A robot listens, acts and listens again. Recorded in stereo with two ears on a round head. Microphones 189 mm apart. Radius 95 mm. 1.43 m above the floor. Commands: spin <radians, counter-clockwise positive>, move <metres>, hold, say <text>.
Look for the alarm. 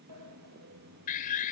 spin 0.70
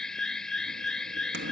say Found it: an alarm, straight ahead.